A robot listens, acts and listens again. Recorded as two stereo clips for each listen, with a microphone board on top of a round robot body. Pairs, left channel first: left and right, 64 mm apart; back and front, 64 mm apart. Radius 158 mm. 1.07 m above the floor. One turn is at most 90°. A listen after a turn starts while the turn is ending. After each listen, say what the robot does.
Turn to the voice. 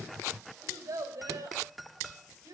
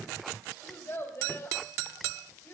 Turn 90° right.
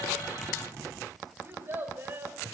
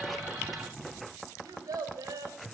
Turn 30° right.
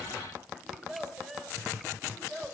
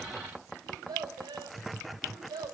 Found it: a child speaking, straight ahead.